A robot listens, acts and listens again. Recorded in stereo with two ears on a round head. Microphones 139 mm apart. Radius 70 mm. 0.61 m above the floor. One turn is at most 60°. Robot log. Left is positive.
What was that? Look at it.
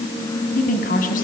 note: The woman speaking: about 60° left or 120° left.
cmd yaw +60
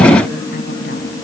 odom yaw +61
cmd idle
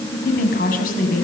note: So it is at 60° left.
cmd yaw +60
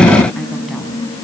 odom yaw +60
cmd idle
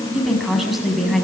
end: Found it: a woman speaking, straight ahead.